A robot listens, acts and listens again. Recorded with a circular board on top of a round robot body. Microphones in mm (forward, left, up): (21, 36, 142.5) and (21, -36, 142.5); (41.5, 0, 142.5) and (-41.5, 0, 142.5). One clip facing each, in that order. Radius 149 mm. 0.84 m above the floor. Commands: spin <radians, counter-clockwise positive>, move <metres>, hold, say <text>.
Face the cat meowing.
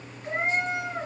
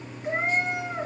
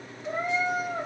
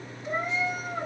spin -0.17
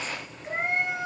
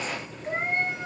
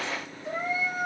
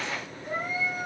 say Found it: a cat meowing, straight ahead, 2 to 4 m away.